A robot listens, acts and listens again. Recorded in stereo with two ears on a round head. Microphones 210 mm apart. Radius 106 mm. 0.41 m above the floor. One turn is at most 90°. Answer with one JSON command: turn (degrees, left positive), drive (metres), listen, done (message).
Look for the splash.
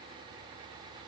{"listen": true}
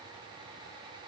{"listen": true}
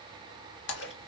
{"turn": 55}
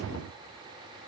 {"listen": true}
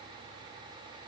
{"done": "I heard a splash, but can't make it out now. It was about straight ahead or 70° left."}